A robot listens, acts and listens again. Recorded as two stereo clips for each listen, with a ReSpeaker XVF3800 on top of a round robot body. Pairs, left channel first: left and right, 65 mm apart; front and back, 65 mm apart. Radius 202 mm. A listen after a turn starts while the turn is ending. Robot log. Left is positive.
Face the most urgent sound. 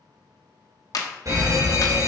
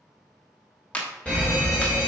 note: The fire alarm: 75° right.
cmd yaw -75
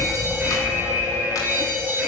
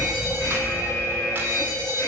note: The fire alarm is now 25° right.
cmd yaw -25
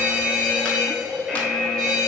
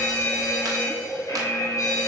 note: The fire alarm is now 10° left.
cmd yaw +10
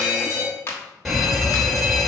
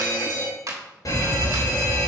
end: Facing the fire alarm, 2 to 4 m away.